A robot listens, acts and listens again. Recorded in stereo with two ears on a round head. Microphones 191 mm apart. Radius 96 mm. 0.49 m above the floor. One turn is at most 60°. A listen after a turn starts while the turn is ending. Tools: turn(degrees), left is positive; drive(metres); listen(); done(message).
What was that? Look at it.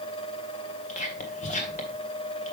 turn(degrees=35)
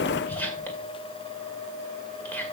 turn(degrees=10)
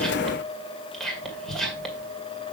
done("Found it: whispering, straight ahead, 2 to 4 m away.")